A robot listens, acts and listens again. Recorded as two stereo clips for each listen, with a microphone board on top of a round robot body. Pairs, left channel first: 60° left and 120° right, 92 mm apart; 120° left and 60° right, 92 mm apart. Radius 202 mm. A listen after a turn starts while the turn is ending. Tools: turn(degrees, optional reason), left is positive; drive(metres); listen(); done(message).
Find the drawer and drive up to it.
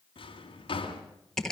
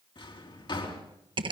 turn(degrees=90, reason="The drawer: 90° left.")
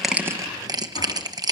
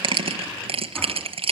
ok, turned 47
turn(degrees=40, reason="Nothing new. It was at 40° left.")
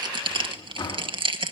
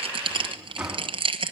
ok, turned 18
turn(degrees=25, reason="The drawer is now 25° left.")
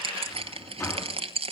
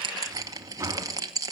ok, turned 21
drive(metres=1.0)
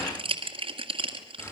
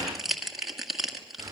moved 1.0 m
listen()
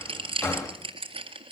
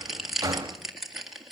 drive(metres=1.0)
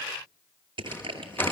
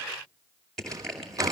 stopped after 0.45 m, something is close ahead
turn(degrees=-10, reason="The drawer is now 10° right.")
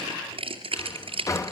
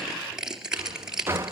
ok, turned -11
done("Arrived at the drawer, straight ahead.")